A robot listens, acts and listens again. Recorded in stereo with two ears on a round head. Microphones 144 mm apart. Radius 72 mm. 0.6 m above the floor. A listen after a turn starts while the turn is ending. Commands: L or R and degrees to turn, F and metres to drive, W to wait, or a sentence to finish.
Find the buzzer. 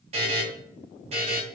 R40
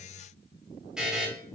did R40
Facing the buzzer.